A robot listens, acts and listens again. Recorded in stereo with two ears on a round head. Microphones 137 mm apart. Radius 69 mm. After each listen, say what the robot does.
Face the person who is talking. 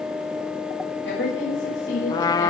Turn 90° left.
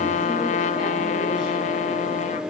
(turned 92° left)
Keep listening.
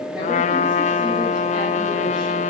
Keep listening.
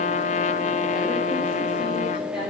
I heard a woman speaking from this way, but can't make it out now.